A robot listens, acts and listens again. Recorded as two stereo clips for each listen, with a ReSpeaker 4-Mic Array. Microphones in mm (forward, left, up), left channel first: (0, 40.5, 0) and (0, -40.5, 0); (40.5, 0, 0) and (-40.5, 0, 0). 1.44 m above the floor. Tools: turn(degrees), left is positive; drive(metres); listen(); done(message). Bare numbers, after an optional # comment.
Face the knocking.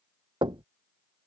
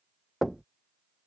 # The knocking: 90° right.
turn(-90)
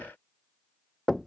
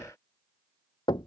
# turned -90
done("Facing the knocking.")